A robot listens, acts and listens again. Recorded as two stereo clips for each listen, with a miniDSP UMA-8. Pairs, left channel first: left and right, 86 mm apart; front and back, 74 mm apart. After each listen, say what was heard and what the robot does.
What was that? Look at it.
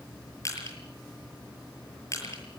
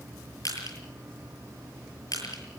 The crushing: 35° left. Turn 35° left.
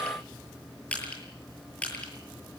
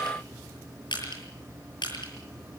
The crushing is now 15° left. Turn 15° left.
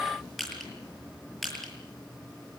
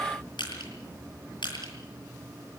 Facing the crushing.